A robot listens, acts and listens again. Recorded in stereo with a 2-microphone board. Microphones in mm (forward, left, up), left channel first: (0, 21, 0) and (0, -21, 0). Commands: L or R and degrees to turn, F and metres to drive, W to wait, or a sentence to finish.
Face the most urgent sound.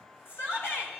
L70
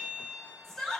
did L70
L10
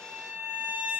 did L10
W
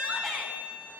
Found it: a shout, straight ahead, 2 to 4 m away.